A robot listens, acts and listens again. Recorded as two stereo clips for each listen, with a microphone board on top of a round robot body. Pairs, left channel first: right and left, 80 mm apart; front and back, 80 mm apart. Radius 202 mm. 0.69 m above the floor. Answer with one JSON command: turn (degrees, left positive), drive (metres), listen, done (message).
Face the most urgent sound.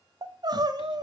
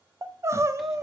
{"turn": 125}
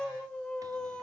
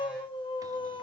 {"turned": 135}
{"turn": -10}
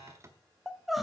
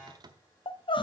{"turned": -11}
{"done": "Found it: crying, straight ahead, 1 to 2 m away."}